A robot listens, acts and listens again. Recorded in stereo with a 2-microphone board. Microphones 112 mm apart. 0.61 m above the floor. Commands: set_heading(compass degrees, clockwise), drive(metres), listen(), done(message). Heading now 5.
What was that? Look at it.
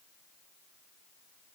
listen()
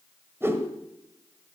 set_heading(25)
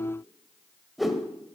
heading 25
done("Facing the whoosh, 1 to 2 m away.")